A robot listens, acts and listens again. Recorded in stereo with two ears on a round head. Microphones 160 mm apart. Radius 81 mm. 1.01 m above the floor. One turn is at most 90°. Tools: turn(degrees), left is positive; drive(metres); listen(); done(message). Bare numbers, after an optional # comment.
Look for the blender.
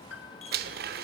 # The blender: about 60° right or 120° right.
turn(-60)
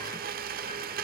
# So it is at 55° right.
turn(-55)
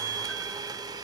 # The blender is now 20° right.
turn(-20)
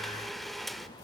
done("Found it: a blender, straight ahead, 1 to 2 m away.")